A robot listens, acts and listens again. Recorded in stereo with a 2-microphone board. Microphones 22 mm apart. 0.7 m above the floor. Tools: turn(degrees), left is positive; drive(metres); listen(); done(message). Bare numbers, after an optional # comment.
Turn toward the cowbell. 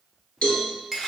# The cowbell: about 65° left or 115° left.
turn(65)
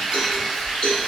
# So it is at 45° left.
turn(45)
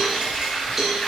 done("Found it: a cowbell, straight ahead.")